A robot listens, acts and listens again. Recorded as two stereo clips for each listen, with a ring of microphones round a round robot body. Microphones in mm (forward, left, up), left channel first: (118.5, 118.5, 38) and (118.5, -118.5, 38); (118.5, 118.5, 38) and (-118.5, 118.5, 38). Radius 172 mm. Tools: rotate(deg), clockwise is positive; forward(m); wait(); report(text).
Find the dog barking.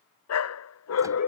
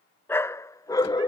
rotate(-70)
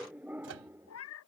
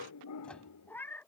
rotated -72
rotate(10)
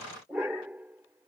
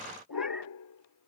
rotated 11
report("Facing the dog barking.")